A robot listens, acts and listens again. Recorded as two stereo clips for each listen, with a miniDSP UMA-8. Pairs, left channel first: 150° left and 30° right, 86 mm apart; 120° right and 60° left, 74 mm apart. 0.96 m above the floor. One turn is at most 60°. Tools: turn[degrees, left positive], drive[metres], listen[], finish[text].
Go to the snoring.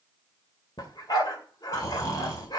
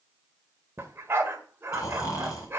Thought: The snoring: 160° right.
Action: turn[-60]
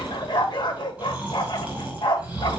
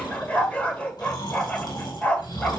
Thought: The snoring is now 110° right.
Action: turn[-60]
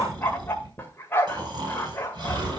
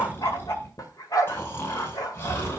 Thought: The snoring is now 65° right.
Action: turn[-60]
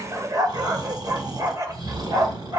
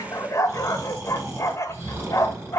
Action: drive[1.0]
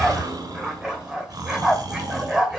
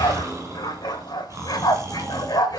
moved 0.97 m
Thought: The snoring is now 10° left.
Action: turn[10]
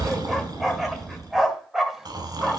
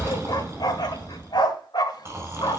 Action: drive[1.0]
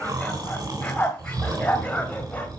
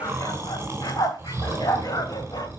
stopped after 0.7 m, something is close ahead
Action: finish[Blocked. The snoring is further on, straight ahead.]